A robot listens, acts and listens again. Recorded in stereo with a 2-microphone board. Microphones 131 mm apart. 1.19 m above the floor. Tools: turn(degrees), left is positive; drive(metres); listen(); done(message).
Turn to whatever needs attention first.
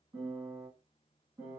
listen()
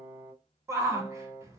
turn(degrees=-20)
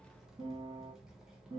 listen()
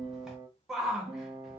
done("Facing the shout.")